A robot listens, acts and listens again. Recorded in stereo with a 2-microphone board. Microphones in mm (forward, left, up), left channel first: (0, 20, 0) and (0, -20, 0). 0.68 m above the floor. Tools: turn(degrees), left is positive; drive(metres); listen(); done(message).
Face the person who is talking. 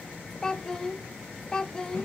turn(degrees=20)
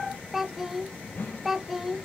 done("Facing the child speaking.")